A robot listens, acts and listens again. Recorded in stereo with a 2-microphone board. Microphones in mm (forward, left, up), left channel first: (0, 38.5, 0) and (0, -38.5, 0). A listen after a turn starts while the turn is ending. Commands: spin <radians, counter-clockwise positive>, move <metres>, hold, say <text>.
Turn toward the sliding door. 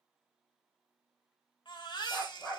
hold
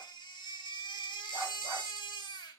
hold
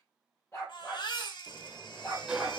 spin -0.52
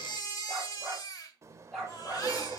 spin -2.44
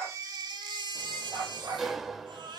say Facing the sliding door.